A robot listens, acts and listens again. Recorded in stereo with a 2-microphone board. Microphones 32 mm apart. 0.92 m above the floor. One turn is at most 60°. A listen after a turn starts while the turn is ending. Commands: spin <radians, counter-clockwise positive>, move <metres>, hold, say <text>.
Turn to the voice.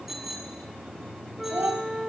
spin -1.05
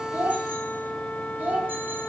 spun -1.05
spin -0.79
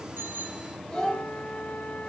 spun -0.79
spin 0.17
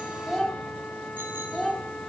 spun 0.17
say Found it: a child speaking, straight ahead, 2 to 4 m away.